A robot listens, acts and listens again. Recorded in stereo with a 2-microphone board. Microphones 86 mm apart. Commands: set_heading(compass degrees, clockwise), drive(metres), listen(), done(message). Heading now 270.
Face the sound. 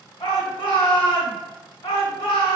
set_heading(195)
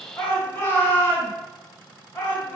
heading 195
set_heading(170)
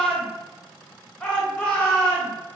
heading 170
set_heading(160)
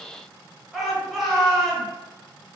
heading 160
done("Facing the shout.")